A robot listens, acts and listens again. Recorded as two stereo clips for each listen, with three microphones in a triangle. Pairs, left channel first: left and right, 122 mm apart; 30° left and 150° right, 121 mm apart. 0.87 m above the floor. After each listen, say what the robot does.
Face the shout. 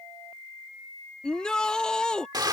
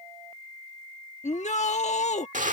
Found it: a shout, straight ahead.